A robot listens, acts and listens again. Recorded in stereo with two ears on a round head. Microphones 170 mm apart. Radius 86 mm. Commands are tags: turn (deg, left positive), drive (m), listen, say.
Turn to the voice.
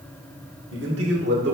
<turn deg="-55"/>
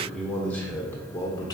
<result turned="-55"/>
<turn deg="20"/>
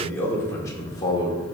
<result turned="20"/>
<turn deg="25"/>
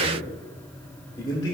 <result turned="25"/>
<turn deg="20"/>
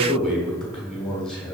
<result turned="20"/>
<say>Facing the man speaking, 1 to 2 m away.</say>